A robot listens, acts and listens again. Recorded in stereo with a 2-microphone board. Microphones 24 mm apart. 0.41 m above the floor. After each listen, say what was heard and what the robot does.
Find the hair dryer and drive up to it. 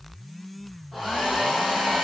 Turn 30° right.
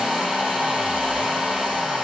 So it is at 145° right. Turn 145° right.
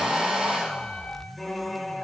The hair dryer is now 40° right. Turn 40° right.
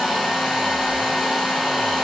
Drive 1.0 m forward.
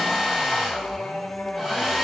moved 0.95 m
The hair dryer is now 10° right. Turn 10° right.
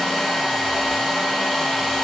Drive 1.0 m forward.
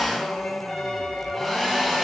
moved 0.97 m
Drive 1.0 m forward.
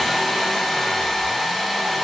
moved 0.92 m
Drive 1.0 m forward.
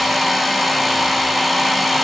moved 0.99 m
Drive 1.0 m forward.
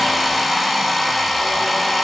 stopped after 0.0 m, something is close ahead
Arrived at the hair dryer, straight ahead.